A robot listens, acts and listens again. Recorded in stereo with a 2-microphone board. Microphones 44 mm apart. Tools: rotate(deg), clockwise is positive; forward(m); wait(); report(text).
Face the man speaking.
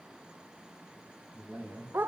rotate(65)
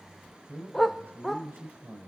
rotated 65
rotate(55)
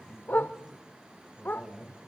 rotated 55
rotate(15)
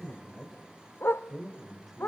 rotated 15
report("Found it: a man speaking, straight ahead, 2 to 4 m away.")